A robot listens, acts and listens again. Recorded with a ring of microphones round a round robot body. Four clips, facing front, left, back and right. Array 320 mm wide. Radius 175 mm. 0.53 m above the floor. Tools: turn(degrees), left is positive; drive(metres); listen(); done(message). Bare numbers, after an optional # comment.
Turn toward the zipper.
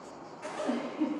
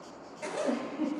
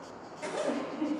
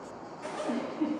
# The zipper: 130° left.
turn(130)
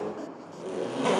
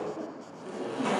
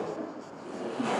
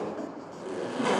# The zipper is now 25° right.
turn(-25)
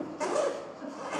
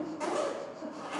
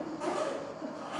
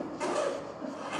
# The zipper is now 10° right.
turn(-10)
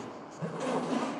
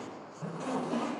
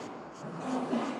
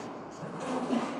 done("Facing the zipper.")